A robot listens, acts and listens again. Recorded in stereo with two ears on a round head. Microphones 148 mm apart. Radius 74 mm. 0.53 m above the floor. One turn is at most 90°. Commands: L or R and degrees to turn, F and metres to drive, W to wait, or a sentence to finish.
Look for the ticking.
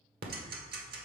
R60
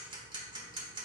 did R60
R35
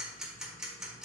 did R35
Found it: ticking, straight ahead, 1 to 2 m away.